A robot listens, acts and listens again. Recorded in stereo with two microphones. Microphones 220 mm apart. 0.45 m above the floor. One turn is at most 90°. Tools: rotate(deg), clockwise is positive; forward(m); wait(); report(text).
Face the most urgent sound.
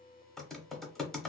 wait()
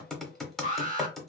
rotate(35)
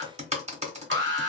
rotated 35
rotate(90)
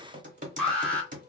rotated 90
report("Facing the alarm.")